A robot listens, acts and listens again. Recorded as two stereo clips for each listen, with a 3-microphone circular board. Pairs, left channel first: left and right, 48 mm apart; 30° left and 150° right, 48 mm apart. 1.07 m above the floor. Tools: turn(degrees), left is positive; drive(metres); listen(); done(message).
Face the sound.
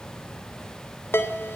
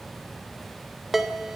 turn(degrees=125)
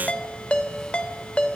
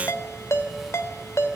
turn(degrees=25)
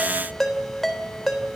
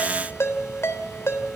done("Found it: a ringtone, straight ahead.")